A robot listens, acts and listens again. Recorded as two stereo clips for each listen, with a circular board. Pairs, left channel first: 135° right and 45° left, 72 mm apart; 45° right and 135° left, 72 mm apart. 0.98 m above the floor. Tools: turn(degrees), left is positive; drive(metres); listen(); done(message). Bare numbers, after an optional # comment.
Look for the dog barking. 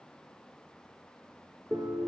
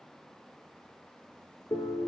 listen()
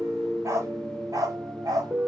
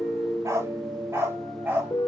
# The dog barking: 70° left.
turn(70)
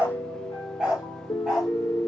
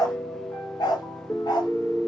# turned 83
# The dog barking is now 40° right.
turn(-40)
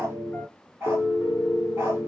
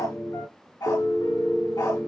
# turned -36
# The dog barking is now 15° right.
turn(-15)
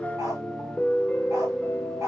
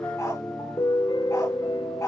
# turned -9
done("Facing the dog barking.")